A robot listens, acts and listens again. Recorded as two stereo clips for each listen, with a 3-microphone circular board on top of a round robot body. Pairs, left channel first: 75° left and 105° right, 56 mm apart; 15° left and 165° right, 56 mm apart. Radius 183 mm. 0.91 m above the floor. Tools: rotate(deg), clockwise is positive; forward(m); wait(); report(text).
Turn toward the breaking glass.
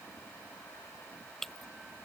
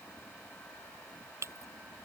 rotate(-160)
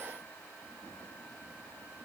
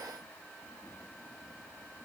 report("Facing where the breaking glass came from. I can't hear it now.")